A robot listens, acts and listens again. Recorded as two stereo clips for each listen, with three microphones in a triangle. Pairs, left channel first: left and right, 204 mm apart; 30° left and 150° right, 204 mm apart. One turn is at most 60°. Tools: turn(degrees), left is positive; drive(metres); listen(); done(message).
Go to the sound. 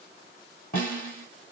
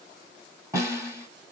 turn(degrees=60)
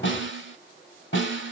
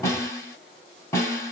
turn(degrees=60)
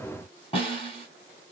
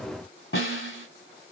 turn(degrees=30)
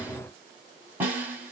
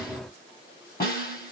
turn(degrees=-10)
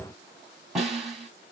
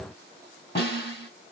drive(metres=1.0)
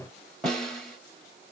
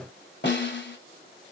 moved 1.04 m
drive(metres=1.0)
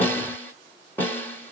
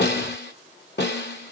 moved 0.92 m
turn(degrees=10)
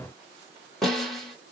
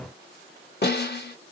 drive(metres=1.0)
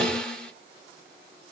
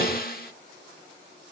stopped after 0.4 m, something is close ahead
done("Arrived at the snare drum, straight ahead.")